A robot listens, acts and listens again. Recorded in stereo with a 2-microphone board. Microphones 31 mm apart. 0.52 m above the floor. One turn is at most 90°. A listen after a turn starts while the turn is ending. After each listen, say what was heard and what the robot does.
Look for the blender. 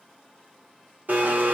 The blender: about 60° right or 120° right. Turn 60° right.
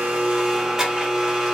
So it is at 15° right. Turn 15° right.
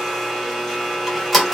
Found it: a blender, straight ahead.